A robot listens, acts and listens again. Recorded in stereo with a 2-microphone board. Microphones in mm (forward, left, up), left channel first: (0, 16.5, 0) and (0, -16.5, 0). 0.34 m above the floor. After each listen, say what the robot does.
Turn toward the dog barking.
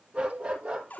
Turn 40° right.
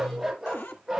Found it: a dog barking, straight ahead, over 4 m away.